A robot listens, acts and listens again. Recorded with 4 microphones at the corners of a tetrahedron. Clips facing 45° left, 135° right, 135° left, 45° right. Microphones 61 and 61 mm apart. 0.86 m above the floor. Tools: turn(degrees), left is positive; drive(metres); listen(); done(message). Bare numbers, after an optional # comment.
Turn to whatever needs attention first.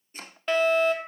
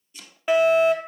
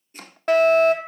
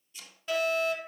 # The fire alarm: 150° left.
turn(150)
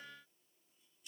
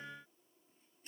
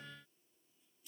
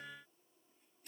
listen()
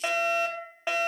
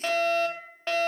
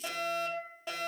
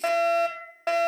# The fire alarm is now 30° right.
turn(-30)
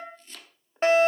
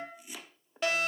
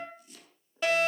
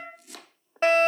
done("Found it: a fire alarm, straight ahead, 2 to 4 m away.")